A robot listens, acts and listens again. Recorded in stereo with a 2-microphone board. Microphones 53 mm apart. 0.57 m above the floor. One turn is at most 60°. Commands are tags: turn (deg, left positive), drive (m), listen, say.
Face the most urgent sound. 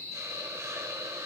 <listen/>
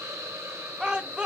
<turn deg="-15"/>
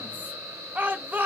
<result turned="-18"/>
<turn deg="-60"/>
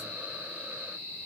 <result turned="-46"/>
<turn deg="-60"/>
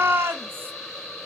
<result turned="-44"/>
<turn deg="-55"/>
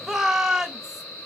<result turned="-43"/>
<turn deg="-10"/>
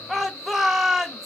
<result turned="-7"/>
<say>Found it: a shout, straight ahead, 2 to 4 m away.</say>